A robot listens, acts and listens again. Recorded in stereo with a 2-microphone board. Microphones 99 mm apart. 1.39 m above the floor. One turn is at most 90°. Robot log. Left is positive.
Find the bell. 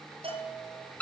note: The bell: about 70° right or 110° right.
cmd yaw -70
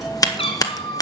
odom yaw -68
cmd idle
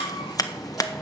cmd idle
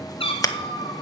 end: I heard a bell, but can't make it out now. It was about straight ahead or 45° right.